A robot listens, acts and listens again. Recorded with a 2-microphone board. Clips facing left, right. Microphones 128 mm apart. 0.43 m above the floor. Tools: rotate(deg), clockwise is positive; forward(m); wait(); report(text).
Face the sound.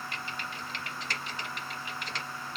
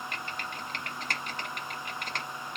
rotate(50)
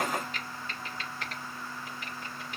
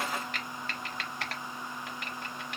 rotate(75)
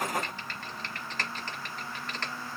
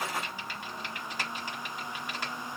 rotate(10)
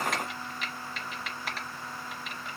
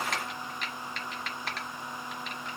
report("Facing the typing on a keyboard, under 1 m away.")